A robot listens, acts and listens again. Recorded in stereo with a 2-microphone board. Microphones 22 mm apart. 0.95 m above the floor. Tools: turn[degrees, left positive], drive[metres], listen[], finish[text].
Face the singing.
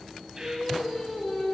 Thought: The singing: about 40° left or 140° left.
Action: turn[40]
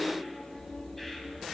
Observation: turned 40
Action: listen[]
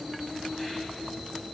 Thought: So it is at 125° left.
Action: turn[125]
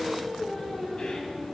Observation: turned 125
Thought: The singing is now 15° left.
Action: turn[15]
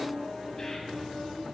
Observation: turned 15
Action: finish[Facing the singing, 2 to 4 m away.]